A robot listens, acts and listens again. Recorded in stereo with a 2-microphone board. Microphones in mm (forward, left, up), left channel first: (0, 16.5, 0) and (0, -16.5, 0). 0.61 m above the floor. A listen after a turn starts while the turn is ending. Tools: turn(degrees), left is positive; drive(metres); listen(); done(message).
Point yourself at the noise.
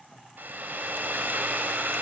turn(degrees=-90)
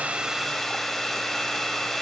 turn(degrees=10)
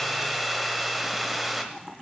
done("Facing the hair dryer.")